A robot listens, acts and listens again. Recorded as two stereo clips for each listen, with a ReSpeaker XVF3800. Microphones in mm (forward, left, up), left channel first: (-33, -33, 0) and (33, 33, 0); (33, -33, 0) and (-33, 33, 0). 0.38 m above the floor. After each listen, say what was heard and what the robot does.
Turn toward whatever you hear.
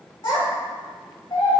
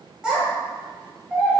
The child speaking: 145° right. Turn 145° right.
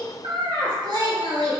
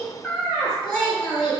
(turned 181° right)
The child speaking is now 35° left. Turn 35° left.
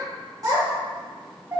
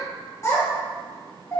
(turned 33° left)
Found it: a child speaking, straight ahead.